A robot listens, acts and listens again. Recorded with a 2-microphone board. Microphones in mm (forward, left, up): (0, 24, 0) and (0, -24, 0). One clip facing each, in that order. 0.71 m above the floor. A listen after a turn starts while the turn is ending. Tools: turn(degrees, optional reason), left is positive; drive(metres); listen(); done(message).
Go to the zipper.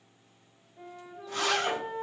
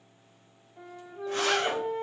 turn(degrees=-55, reason="The zipper: about 55° right or 125° right.")
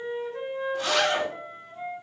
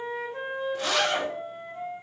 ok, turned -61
drive(metres=1.0)
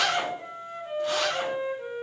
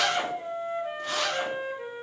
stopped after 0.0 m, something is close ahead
done("Something is in my way. I am facing the zipper but have not reached it.")